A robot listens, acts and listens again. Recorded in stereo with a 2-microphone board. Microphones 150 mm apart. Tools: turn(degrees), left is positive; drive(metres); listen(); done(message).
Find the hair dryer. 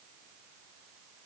listen()
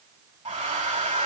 turn(degrees=-50)
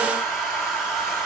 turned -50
done("Facing the hair dryer.")